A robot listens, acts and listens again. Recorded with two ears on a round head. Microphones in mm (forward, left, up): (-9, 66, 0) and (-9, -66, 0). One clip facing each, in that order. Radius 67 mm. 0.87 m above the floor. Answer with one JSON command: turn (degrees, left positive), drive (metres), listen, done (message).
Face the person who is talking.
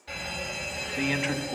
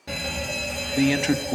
{"turn": -45}
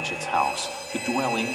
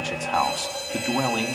{"done": "Found it: a man speaking, straight ahead, 1 to 2 m away."}